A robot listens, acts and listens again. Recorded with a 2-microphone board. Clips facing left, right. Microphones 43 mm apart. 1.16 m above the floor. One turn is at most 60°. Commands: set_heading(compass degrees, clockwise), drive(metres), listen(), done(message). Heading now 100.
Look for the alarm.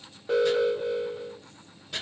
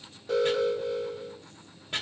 set_heading(80)
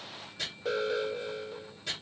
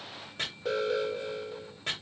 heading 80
done("Facing the alarm.")